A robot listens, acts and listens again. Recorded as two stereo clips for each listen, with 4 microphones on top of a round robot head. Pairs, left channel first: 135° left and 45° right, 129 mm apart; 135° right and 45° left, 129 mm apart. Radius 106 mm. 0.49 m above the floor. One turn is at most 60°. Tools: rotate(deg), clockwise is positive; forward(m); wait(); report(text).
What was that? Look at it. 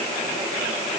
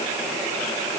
wait()
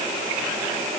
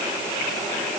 wait()
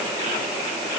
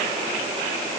report("I can't make out anything.")